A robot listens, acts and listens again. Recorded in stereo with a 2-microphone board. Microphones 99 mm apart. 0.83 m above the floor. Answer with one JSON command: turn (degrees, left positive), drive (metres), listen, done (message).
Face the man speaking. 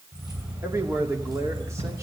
{"turn": -30}
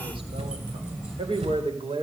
{"turn": -115}
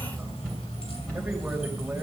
{"listen": true}
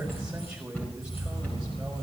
{"done": "Facing the man speaking, over 4 m away."}